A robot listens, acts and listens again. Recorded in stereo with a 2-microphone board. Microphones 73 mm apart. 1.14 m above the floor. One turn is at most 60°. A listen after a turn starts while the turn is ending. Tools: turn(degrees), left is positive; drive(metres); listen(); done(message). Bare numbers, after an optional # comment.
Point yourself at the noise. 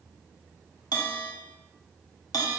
# The bell: about 70° left or 110° left.
turn(60)
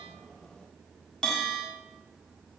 # So it is at 10° left.
turn(10)
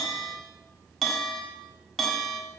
done("Facing the bell, 2 to 4 m away.")